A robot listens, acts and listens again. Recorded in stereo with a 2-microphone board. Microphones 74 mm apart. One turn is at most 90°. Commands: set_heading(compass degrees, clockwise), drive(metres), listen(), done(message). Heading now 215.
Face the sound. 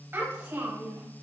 set_heading(240)
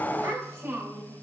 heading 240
set_heading(280)
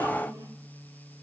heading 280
listen()
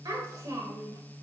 set_heading(10)
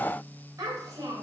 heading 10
set_heading(70)
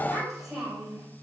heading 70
done("Found it: a child speaking, straight ahead.")